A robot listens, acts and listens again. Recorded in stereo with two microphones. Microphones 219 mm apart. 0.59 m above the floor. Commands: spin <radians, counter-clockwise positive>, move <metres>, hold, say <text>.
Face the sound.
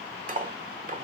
spin -0.61
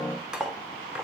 say Facing the cutlery clinking.